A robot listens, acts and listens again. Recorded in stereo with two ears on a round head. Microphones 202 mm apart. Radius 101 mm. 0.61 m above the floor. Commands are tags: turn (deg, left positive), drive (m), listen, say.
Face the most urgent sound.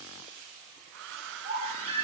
<turn deg="-25"/>
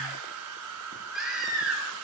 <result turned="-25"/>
<say>Facing the baby crying, over 4 m away.</say>